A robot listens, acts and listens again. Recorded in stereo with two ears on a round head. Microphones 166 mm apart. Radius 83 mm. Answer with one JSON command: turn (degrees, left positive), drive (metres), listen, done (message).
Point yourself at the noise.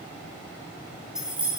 {"turn": -30}
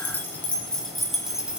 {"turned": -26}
{"turn": -30}
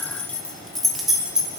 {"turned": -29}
{"turn": -30}
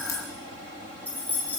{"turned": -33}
{"turn": 10}
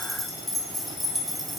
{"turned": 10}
{"done": "Facing the keys jangling."}